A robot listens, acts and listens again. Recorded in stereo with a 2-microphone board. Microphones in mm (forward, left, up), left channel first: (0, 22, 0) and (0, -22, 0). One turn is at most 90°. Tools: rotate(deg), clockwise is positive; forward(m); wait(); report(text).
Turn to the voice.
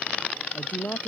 rotate(-35)
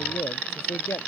rotate(-90)
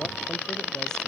rotate(-15)
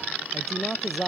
report("Found it: a man speaking, straight ahead.")